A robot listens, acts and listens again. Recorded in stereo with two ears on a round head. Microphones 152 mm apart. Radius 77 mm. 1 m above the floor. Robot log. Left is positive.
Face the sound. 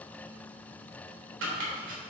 cmd yaw -90
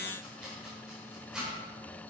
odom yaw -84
end: Found it: chopping, straight ahead, 2 to 4 m away.